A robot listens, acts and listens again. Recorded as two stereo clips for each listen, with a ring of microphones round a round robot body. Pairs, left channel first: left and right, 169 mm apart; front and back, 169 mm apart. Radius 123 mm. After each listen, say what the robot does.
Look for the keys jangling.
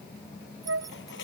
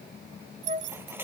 Turn 165° right.
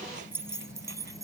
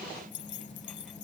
Turn 20° right.
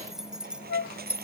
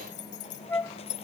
Turn 10° right.
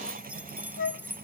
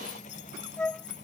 Turn 10° right.
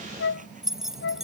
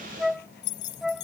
Found it: keys jangling, straight ahead.